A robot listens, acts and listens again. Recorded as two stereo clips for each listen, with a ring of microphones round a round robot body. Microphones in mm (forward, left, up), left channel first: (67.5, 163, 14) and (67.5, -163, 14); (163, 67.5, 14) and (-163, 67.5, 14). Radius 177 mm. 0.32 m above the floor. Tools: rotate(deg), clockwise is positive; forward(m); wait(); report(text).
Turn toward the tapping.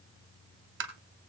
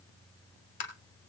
rotate(35)
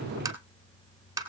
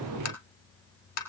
rotate(10)
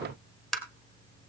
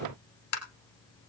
report("Found it: tapping, straight ahead.")